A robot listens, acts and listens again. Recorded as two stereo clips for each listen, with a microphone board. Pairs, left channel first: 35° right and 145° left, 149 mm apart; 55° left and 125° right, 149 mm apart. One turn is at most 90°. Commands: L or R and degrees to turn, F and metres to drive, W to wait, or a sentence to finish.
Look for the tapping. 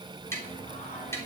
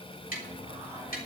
L40
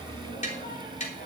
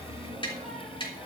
Found it: tapping, straight ahead, 2 to 4 m away.